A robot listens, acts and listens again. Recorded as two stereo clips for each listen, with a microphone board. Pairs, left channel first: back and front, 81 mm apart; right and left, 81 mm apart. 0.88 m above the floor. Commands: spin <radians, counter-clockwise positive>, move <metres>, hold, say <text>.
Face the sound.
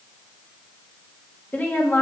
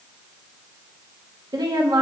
spin 2.09
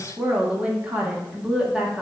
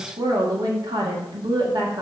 spin 1.40
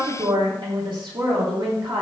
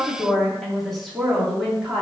say Found it: a woman speaking, straight ahead, 2 to 4 m away.